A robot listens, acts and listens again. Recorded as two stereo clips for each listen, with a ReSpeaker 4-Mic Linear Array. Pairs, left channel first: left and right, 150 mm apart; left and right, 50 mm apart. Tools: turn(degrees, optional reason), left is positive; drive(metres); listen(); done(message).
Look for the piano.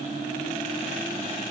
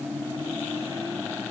listen()
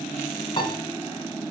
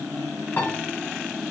turn(degrees=35, reason="The piano: about 35° left or 145° left.")
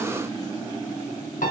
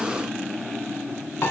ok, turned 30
turn(degrees=110, reason="So it is at 110° left.")
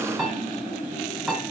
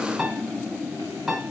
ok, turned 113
done("Found it: a piano, straight ahead.")